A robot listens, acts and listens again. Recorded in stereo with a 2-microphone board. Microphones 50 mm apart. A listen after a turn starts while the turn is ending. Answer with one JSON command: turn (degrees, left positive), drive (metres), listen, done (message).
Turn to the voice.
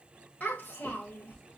{"turn": 25}
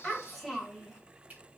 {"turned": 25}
{"turn": -10}
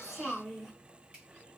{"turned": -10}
{"turn": -10}
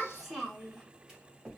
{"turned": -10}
{"turn": -10}
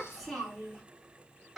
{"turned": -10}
{"turn": -10}
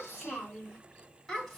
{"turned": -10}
{"done": "Found it: a child speaking, straight ahead."}